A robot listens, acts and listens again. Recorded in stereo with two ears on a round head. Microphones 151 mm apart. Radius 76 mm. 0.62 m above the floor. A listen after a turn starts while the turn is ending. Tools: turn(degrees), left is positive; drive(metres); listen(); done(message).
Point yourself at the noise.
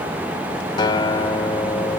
turn(degrees=25)
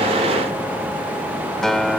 done("Facing the guitar.")